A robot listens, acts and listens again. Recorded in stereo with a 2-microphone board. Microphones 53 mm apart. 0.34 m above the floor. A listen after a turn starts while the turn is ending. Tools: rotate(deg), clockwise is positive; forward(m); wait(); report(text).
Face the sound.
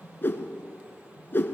rotate(-40)
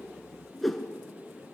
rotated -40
report("Facing the whoosh, 1 to 2 m away.")